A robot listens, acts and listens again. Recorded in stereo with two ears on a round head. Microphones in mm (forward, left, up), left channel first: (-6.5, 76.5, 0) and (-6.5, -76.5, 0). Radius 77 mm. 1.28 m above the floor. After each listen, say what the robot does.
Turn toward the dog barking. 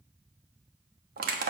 Keep listening.
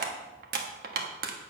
Keep listening.
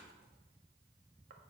I can't make out a dog barking to turn to.